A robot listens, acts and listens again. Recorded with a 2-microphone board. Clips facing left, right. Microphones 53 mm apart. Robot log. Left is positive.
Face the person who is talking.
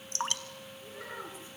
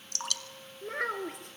note: The child speaking: about 65° right or 115° right.
cmd yaw -65
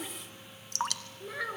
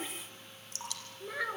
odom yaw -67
end: Found it: a child speaking, straight ahead.